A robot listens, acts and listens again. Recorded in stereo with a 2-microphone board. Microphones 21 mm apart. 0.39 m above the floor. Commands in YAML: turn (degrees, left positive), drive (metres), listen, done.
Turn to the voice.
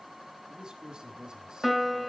turn: -35
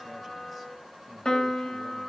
listen: true
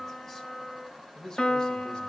turn: 30
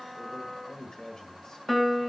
turn: 35
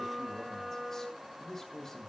turn: 15
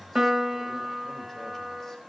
done: "Found it: a man speaking, straight ahead, 1 to 2 m away."